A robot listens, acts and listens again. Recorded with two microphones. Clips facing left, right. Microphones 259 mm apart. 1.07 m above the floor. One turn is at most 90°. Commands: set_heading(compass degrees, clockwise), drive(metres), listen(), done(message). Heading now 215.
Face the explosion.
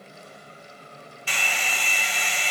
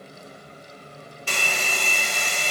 listen()
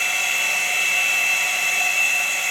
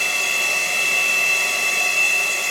listen()
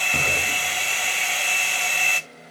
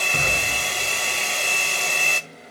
set_heading(185)
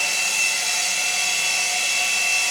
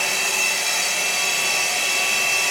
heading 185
listen()
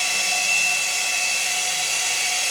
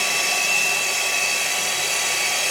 done("I heard an explosion, but can't make it out now. It was about straight ahead or 120° left.")